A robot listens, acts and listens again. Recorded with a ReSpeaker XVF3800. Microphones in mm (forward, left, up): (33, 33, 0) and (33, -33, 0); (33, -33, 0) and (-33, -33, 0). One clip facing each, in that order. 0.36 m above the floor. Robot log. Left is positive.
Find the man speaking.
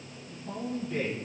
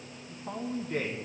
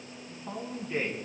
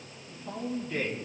note: The man speaking: 65° right.
cmd yaw -65
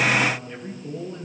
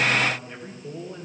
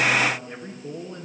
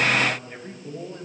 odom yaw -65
note: The man speaking is now 10° right.
cmd yaw -10
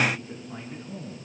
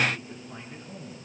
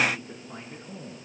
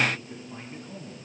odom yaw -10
end: Found it: a man speaking, straight ahead, over 4 m away.